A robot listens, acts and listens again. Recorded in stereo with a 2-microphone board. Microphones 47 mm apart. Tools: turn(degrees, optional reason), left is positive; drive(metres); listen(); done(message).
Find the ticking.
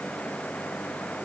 listen()
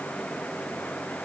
listen()
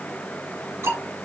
turn(degrees=-90)
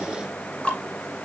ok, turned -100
turn(degrees=20, reason="So it is at 20° left.")
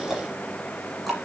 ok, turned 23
done("Found it: ticking, straight ahead.")